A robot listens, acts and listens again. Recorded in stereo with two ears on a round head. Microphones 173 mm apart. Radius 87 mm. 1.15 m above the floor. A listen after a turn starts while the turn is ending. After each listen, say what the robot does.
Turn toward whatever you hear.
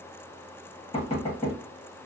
Turn 30° left.
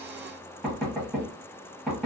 Facing the knocking.